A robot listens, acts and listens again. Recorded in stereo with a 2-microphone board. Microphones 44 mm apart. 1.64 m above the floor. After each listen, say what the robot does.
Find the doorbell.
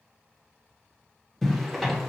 Keep listening.
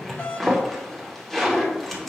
Turn 50° left.
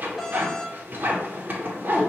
Facing the doorbell, under 1 m away.